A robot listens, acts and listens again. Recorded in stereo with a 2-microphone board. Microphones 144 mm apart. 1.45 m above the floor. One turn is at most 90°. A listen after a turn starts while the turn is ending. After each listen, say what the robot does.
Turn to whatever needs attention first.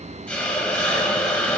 Keep listening.
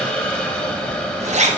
Keep listening.
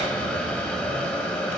I can't make out anything urgent, only a zipper and a hiss.